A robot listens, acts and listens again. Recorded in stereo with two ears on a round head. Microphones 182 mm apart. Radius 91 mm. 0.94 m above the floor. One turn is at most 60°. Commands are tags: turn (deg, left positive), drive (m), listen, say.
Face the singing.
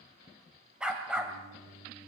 <turn deg="-35"/>
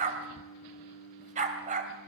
<turn deg="-60"/>
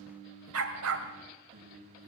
<turn deg="-60"/>
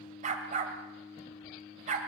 <turn deg="-15"/>
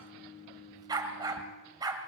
<say>Found it: singing, straight ahead.</say>